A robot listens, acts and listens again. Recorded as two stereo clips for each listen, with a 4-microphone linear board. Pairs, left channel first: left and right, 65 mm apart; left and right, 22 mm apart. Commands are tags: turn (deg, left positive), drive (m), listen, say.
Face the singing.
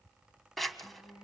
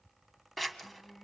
<turn deg="90"/>
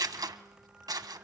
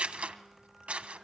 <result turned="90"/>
<listen/>
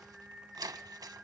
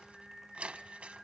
<turn deg="-15"/>
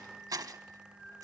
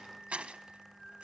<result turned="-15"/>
<say>Facing the singing, over 4 m away.</say>